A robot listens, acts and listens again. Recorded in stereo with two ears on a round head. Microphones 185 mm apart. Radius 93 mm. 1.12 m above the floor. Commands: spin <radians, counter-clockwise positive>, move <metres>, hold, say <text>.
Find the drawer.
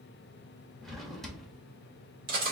spin 0.52
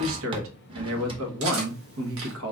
spin -0.52
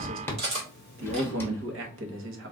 spin 0.17
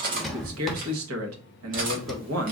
say Facing the drawer, under 1 m away.